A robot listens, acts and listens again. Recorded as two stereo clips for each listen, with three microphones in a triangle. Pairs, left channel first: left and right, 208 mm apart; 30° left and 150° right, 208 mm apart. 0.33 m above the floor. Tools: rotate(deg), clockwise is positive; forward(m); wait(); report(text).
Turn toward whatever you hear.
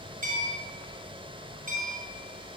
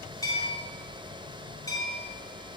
rotate(45)
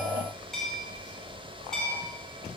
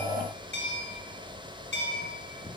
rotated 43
report("Found it: a bell, straight ahead, 2 to 4 m away.")